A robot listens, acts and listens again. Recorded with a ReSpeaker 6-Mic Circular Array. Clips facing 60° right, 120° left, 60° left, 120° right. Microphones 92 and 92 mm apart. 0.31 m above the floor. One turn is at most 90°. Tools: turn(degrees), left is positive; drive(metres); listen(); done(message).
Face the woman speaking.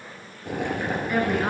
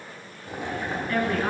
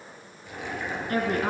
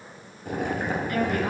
turn(degrees=20)
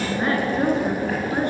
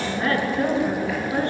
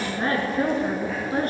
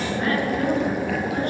turn(degrees=10)
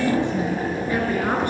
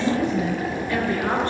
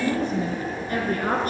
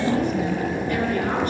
turn(degrees=15)
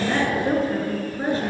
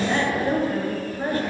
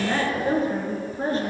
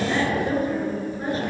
turn(degrees=10)
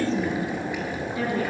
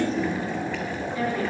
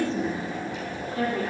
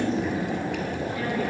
done("Found it: a woman speaking, straight ahead, over 4 m away.")